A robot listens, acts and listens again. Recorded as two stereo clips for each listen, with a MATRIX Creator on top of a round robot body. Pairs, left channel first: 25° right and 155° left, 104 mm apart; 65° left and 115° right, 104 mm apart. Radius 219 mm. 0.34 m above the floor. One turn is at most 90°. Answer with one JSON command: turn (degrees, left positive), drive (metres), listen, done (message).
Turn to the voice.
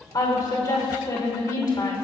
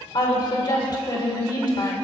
{"turn": 25}
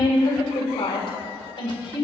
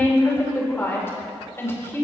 {"done": "Found it: a woman speaking, straight ahead, 2 to 4 m away."}